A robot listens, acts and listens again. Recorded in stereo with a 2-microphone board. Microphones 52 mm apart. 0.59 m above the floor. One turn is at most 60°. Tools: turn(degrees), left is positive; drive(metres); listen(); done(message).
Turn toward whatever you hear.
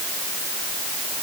listen()
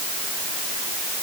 listen()
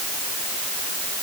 done("I can't make out anything.")